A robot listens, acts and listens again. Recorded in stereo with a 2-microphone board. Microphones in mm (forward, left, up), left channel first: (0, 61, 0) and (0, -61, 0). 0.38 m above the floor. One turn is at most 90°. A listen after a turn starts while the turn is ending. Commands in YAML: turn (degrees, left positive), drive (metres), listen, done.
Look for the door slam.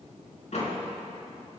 turn: 70
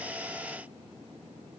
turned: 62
listen: true
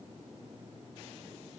done: "I heard a door slam, but can't make it out now. It was about 10° left or 50° left."